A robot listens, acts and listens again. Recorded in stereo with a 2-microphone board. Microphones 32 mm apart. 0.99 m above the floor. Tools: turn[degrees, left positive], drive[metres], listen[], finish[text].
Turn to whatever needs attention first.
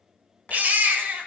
Thought: The baby crying: about 60° right or 120° right.
Action: turn[-60]
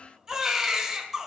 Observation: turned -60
Thought: So it is at 20° right.
Action: turn[-20]
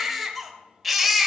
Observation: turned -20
Action: finish[Facing the baby crying.]